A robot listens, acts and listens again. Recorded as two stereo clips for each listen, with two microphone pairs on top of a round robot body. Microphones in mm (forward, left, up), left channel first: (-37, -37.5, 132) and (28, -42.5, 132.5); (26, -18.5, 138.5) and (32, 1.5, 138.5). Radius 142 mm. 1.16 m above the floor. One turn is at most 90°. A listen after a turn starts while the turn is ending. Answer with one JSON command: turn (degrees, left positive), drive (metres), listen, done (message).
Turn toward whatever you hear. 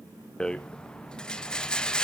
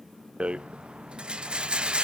{"turn": 90}
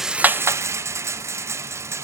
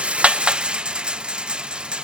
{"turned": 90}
{"turn": 35}
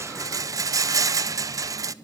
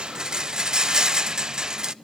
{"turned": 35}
{"turn": 15}
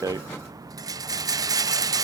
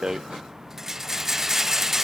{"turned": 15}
{"done": "Facing the rattle, under 1 m away."}